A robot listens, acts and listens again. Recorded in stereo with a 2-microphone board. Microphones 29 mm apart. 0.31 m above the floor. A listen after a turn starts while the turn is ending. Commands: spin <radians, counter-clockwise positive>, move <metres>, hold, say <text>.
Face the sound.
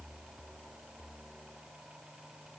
hold
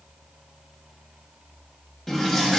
spin 0.52
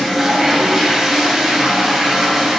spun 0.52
spin -0.35
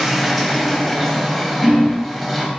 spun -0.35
say Facing the toilet flushing.